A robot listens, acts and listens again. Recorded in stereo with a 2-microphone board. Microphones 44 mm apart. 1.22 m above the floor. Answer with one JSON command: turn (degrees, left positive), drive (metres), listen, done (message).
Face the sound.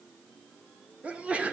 {"turn": -30}
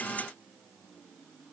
{"listen": true}
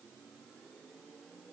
{"done": "I heard a sneeze, but can't make it out now. It was about straight ahead or 120° right."}